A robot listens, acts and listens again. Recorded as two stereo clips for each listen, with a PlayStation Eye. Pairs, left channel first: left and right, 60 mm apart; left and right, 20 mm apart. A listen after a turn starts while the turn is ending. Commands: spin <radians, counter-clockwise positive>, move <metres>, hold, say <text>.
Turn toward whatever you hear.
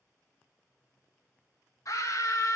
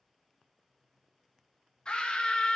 spin 1.05
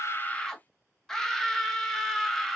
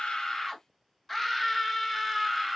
spin 0.17
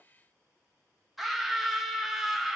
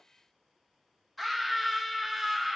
say Found it: a scream, straight ahead.